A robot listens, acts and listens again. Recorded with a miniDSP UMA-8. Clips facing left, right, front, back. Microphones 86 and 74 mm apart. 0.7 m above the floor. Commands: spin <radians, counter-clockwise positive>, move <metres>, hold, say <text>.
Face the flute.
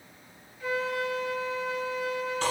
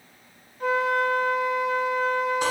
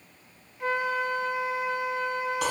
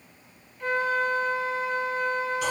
spin -1.31
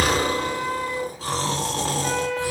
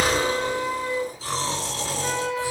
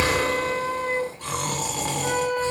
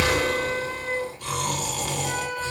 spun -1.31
say Found it: a flute, straight ahead.